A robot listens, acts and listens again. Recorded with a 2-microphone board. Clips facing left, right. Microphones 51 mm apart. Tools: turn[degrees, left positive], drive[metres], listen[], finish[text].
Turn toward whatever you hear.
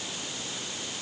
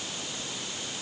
Action: listen[]
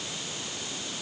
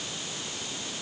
Action: listen[]
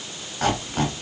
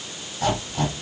Thought: The squeak: about 55° left or 125° left.
Action: turn[55]
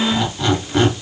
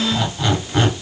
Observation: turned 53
Action: finish[Found it: a squeak, straight ahead, 2 to 4 m away.]